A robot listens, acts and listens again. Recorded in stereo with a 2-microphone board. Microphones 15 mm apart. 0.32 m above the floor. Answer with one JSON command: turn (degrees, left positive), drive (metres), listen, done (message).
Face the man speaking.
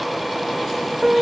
{"listen": true}
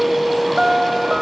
{"listen": true}
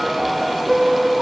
{"done": "I can't make out a man speaking, only a piano."}